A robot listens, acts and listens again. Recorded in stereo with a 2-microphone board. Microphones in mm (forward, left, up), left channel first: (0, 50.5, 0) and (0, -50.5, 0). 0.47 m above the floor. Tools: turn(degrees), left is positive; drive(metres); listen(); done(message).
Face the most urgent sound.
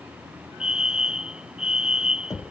turn(degrees=-30)
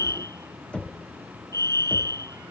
turn(degrees=-140)
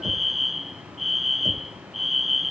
done("Facing the fire alarm.")